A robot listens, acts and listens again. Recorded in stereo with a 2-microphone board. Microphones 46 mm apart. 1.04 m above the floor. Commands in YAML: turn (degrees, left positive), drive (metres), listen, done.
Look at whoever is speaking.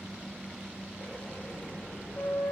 listen: true
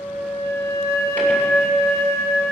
listen: true
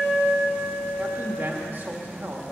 turn: -40
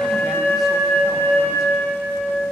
listen: true
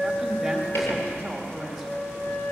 done: "Found it: a man speaking, straight ahead."